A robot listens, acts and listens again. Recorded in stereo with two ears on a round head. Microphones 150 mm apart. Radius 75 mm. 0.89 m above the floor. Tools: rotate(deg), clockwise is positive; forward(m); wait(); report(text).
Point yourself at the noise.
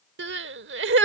rotate(75)
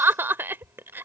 rotate(15)
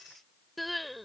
report("Facing the crying.")